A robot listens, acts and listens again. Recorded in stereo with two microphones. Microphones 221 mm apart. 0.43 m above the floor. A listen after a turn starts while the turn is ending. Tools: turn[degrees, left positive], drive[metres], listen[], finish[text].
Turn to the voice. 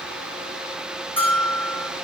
Action: listen[]
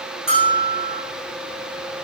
Action: listen[]
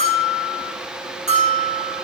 Action: finish[I can't make out anyone speaking to turn to.]